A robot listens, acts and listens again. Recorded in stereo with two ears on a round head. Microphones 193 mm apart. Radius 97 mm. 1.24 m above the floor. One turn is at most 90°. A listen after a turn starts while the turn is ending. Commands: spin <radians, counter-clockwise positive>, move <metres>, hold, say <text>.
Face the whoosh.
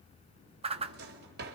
spin -0.52
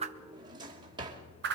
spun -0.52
spin -1.57
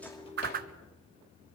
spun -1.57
spin -0.79
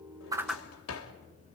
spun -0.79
say Found it: a whoosh, straight ahead.